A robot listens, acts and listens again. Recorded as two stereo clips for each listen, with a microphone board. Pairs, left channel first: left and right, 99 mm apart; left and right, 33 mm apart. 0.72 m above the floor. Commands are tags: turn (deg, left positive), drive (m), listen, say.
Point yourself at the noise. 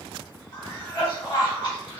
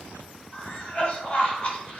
<turn deg="45"/>
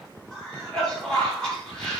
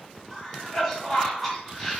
<say>Found it: a cough, straight ahead, 1 to 2 m away.</say>